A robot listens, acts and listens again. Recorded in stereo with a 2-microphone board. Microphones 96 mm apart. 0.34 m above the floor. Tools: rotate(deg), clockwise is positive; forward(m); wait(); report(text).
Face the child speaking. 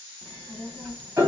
rotate(30)
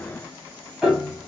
rotate(-30)
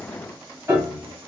rotate(35)
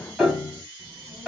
rotate(25)
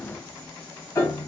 rotate(-10)
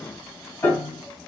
report("Found it: a child speaking, straight ahead.")